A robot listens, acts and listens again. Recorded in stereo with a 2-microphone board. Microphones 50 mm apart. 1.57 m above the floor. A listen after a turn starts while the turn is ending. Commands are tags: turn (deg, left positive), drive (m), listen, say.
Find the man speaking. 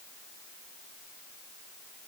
<listen/>
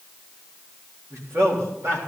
<turn deg="-65"/>
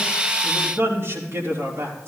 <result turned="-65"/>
<turn deg="-60"/>
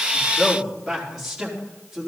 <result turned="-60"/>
<say>Found it: a man speaking, straight ahead.</say>